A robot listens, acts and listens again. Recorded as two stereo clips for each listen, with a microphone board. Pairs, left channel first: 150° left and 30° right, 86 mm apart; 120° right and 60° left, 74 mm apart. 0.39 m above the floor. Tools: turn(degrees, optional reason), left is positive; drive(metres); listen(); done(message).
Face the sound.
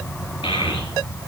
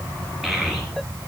turn(degrees=145, reason="The child speaking: 145° left.")
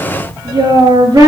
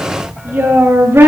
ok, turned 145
done("Facing the child speaking.")